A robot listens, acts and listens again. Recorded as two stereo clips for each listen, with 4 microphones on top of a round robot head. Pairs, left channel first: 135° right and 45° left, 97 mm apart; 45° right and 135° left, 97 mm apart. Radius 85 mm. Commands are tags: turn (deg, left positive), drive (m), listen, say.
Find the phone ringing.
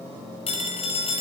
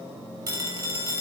<turn deg="-165"/>
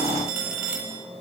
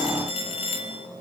<turn deg="-30"/>
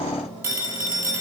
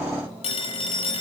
<turn deg="-25"/>
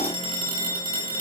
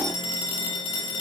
<say>Facing the phone ringing, over 4 m away.</say>